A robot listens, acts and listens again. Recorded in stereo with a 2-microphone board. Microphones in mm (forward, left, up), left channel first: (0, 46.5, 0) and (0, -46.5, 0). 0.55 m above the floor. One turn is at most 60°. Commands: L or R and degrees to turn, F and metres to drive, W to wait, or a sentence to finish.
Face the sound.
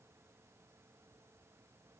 W
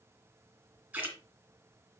R20
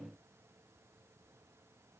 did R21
W
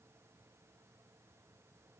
I heard a splash, but can't make it out now. It was about straight ahead or 140° right.